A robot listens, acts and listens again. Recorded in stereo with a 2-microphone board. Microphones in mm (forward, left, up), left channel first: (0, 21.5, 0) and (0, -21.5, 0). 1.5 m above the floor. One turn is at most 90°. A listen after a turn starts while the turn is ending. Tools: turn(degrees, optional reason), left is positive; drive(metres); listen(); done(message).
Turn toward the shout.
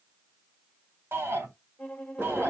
turn(degrees=-70, reason="The shout: about 70° right or 110° right.")
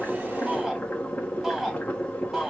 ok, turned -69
done("Facing the shout.")